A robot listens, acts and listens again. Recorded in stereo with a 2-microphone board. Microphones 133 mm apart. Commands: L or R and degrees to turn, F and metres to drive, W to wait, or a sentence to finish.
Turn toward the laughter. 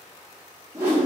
W
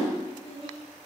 L30
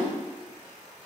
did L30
W
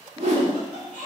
R25
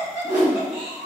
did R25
Facing the laughter, 2 to 4 m away.